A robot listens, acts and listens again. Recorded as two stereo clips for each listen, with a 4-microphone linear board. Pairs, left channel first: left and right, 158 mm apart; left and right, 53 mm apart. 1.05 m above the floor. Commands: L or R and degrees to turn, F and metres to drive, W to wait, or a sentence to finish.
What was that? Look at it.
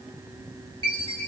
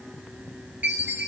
R30
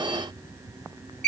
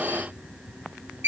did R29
R115
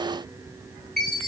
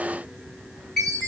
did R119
Found it: a chime, straight ahead, 1 to 2 m away.